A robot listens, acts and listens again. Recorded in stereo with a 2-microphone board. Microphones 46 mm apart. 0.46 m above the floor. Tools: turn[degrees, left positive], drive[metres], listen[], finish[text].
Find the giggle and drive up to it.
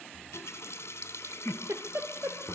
Thought: The giggle: about 65° right or 115° right.
Action: turn[-65]
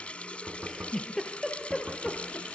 Action: drive[1.0]
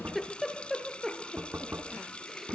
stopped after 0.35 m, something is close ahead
Action: finish[Blocked. The giggle is further on, straight ahead.]